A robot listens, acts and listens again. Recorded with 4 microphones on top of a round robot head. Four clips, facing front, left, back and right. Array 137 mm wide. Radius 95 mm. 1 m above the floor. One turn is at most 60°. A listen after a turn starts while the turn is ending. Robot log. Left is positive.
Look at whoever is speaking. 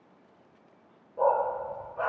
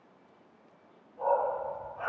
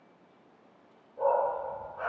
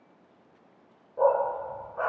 cmd idle
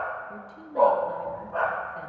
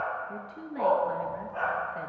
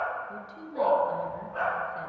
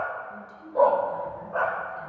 note: The woman speaking: 110° left.
cmd yaw +60
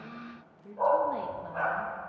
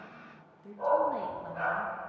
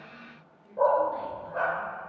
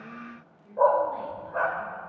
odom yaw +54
note: The woman speaking is now 55° left.
cmd yaw +55
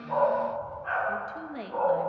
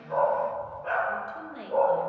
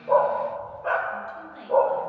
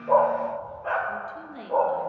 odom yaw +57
end: Facing the woman speaking, 1 to 2 m away.